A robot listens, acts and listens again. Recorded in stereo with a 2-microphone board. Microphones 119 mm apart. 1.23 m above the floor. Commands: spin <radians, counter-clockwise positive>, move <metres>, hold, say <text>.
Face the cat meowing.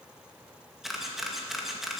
hold
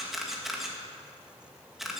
hold
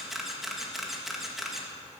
say I can't make out a cat meowing, only a camera shutter.